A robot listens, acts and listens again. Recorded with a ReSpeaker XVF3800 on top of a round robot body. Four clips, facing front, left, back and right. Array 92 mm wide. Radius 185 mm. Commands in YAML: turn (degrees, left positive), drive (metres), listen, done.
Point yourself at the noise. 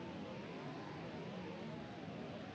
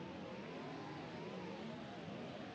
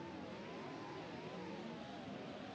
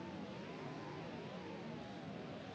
listen: true
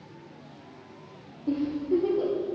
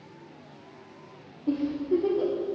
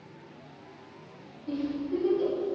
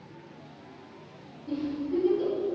turn: 50
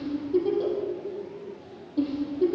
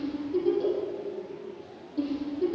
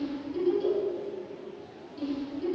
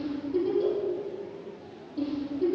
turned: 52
done: "Facing the giggle."